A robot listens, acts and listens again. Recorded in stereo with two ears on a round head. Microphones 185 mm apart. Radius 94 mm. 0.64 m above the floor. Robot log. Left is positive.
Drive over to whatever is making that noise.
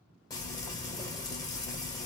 note: The frying: about 20° left or 160° left.
cmd yaw +20
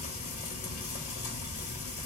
note: So it is at 140° left.
cmd yaw +140
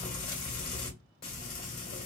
note: The frying is now 50° left.
cmd yaw +50
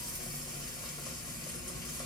note: The frying is now 20° left.
cmd yaw +20
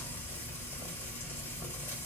note: The frying is now 10° left.
cmd yaw +10
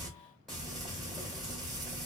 cmd fwd 1.0
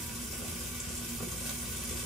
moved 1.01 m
cmd fwd 1.0
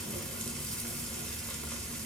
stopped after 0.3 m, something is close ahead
end: I am next to the frying.